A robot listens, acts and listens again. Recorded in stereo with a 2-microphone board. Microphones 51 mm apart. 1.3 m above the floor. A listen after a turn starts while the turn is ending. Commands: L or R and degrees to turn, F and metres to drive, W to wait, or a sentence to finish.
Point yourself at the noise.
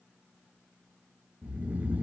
R30
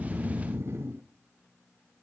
R115
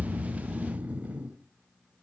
R30
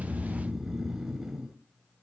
R10
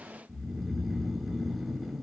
Found it: snoring, straight ahead.